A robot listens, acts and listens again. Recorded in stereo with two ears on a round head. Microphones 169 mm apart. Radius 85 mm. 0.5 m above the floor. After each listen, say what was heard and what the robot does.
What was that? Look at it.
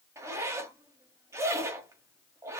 The zipper: about 15° right or 165° right. Turn 15° right.
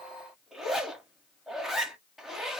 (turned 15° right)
Found it: a zipper, straight ahead.